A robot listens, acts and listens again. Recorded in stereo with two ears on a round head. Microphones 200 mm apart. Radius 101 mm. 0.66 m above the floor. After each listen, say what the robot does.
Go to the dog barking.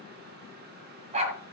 Turn 30° right.
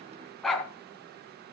Drive 1.0 m forward.
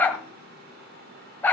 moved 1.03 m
Turn 10° left.
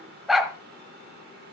Drive 1.0 m forward.
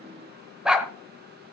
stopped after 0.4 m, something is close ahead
I am next to the dog barking.